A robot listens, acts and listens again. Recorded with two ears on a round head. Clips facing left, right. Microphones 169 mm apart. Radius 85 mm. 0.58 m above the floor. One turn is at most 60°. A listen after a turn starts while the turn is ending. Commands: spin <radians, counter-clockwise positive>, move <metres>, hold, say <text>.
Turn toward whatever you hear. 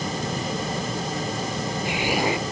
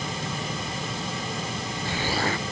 spin 0.52
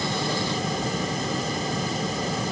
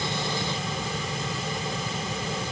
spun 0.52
hold
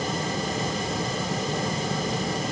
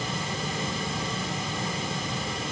say I heard an explosion, but can't make it out now. It was about 15° right or 135° left.